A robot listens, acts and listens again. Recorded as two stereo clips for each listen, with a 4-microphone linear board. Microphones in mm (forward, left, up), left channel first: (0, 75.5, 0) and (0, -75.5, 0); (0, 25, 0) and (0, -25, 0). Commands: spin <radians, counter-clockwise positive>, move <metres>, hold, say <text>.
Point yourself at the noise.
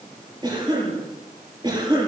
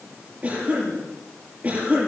spin -0.52
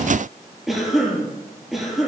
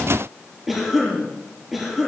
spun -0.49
say Found it: a cough, straight ahead, over 4 m away.